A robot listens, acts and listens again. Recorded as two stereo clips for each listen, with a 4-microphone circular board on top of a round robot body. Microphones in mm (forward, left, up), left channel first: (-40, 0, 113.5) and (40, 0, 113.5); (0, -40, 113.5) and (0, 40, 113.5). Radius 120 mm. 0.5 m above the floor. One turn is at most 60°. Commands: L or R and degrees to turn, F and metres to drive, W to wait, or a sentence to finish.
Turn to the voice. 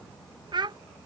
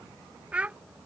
L15
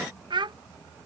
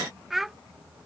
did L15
Found it: a child speaking, straight ahead.